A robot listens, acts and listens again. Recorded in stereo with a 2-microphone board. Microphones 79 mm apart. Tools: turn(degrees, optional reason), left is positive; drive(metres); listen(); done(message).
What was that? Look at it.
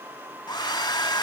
turn(degrees=70, reason="The hair dryer: about 70° left or 110° left.")
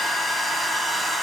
done("Found it: a hair dryer, straight ahead.")